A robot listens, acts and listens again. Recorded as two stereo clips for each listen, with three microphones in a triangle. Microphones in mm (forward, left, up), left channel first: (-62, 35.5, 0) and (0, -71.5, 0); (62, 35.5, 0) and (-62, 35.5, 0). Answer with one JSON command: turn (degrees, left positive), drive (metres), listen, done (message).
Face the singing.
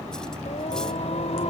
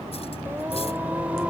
{"turn": 100}
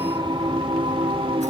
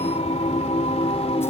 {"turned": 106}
{"turn": -25}
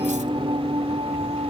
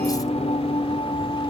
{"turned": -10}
{"turn": -35}
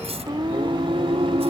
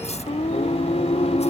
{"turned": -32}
{"turn": -20}
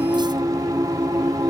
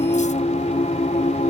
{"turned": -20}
{"done": "Found it: singing, straight ahead."}